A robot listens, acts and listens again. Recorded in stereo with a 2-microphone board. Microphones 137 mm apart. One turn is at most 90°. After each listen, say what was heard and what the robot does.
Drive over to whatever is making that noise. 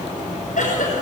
Turn 90° left.
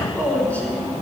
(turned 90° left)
So it is at 15° left. Turn 15° left.
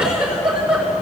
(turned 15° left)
Drive 1.0 m forward.
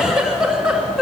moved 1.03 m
Drive 1.0 m forward.
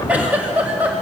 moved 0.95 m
The giggle is now 10° right. Turn 10° right.
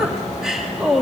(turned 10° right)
Drive 1.0 m forward.
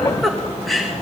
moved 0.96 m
Drive 1.0 m forward.
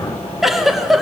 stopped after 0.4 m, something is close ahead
Arrived at the giggle, straight ahead.